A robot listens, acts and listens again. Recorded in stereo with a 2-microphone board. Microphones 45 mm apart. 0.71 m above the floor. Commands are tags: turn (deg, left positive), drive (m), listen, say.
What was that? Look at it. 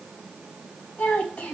<turn deg="35"/>
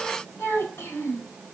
<turn deg="115"/>
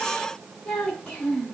<turn deg="25"/>
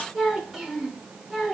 <say>Facing the child speaking.</say>